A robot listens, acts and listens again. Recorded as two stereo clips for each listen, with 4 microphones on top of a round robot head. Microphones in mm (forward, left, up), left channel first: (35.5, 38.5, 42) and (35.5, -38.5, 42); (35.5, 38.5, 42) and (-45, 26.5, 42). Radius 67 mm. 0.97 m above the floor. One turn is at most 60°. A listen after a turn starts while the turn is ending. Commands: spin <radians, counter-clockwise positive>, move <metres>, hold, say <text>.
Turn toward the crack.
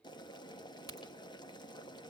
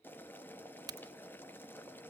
spin 1.05
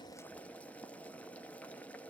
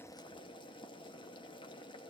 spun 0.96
spin 1.05
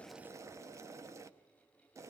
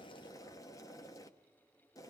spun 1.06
spin 0.52
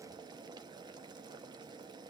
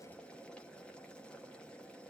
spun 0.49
say I heard a crack from this way, but can't make it out now.